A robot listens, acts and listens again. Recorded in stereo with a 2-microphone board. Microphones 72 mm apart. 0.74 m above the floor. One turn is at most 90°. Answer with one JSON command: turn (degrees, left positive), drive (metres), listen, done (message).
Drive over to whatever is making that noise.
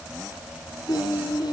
{"turn": 90}
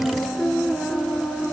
{"drive": 1.0}
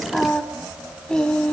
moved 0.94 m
{"turn": 10}
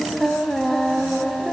{"drive": 1.0}
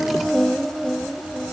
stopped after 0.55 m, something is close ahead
{"done": "Arrived at the singing, straight ahead."}